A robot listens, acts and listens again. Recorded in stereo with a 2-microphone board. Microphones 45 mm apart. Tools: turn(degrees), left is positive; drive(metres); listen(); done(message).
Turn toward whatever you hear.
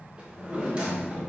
turn(degrees=-25)
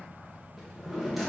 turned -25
done("Facing the drawer.")